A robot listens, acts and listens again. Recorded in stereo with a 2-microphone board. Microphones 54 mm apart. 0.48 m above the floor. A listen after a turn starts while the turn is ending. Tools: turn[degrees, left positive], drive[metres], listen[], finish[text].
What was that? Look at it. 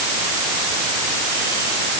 Action: listen[]
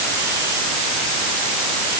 Action: listen[]
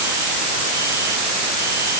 Action: finish[I can't make out anything to turn to.]